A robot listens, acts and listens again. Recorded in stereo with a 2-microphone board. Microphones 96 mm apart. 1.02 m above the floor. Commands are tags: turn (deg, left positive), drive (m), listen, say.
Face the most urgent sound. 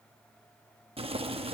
<listen/>
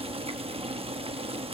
<listen/>
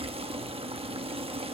<say>I can't make out anything urgent to turn to.</say>